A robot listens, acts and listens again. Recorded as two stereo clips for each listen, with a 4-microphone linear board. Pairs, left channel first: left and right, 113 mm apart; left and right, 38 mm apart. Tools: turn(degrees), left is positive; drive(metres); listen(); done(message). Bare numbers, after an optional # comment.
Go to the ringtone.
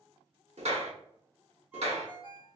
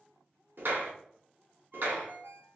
turn(-30)
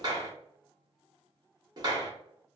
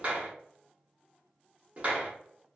listen()
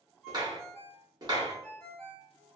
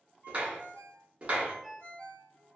# So it is at 20° left.
turn(20)
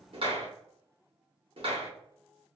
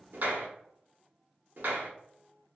listen()
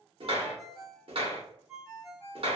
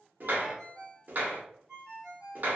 drive(1.0)
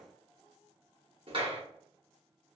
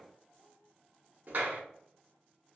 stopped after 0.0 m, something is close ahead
listen()
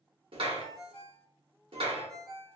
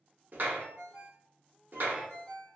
done("Blocked. The ringtone is further on, straight ahead.")